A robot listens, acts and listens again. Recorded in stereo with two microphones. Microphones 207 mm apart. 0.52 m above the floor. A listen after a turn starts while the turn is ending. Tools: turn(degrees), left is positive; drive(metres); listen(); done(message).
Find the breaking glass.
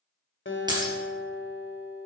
turn(degrees=-20)
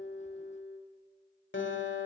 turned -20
listen()
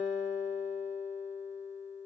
done("I heard breaking glass, but can't make it out now. It was about straight ahead or 140° right.")